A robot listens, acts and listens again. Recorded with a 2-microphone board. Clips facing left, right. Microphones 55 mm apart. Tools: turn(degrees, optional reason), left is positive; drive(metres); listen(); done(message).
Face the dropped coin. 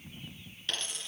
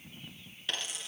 turn(degrees=-30)
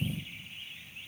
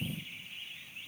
listen()
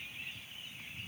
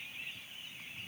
done("I heard a dropped coin, but can't make it out now. It was about 20° left or 140° right.")